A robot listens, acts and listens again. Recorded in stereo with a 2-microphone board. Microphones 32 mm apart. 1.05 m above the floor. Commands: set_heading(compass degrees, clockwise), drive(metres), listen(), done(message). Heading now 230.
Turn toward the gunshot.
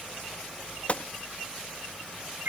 set_heading(185)
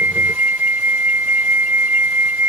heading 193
listen()
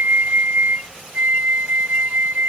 done("I heard a gunshot, but can't make it out now. It was about 10° left or 100° left.")